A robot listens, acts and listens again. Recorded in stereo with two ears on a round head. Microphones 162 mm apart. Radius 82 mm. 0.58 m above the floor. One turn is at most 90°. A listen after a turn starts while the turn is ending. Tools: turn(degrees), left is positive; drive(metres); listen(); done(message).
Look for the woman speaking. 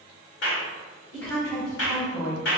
turn(degrees=20)
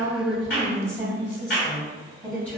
turn(degrees=30)
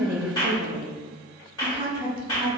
turn(degrees=-15)
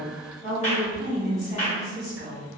done("Found it: a woman speaking, straight ahead.")